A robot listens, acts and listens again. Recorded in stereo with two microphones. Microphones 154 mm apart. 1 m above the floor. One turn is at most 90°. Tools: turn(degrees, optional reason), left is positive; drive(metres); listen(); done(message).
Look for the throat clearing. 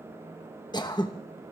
turn(degrees=30, reason="The throat clearing: about 30° left or 150° left.")
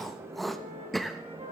done("Facing the throat clearing, 1 to 2 m away.")